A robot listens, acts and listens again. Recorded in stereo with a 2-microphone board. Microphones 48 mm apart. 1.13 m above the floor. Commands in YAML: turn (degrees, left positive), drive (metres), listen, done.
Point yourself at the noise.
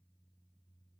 listen: true
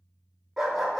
turn: -30
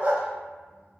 turn: -140
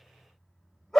done: "Found it: a dog barking, straight ahead."